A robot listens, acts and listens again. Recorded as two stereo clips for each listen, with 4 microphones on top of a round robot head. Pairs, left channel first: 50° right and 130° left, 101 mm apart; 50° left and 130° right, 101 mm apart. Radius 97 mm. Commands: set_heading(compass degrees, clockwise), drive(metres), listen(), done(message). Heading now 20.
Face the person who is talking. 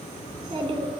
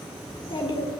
set_heading(295)
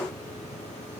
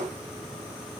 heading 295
listen()
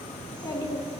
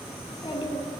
done("Found it: a child speaking, straight ahead.")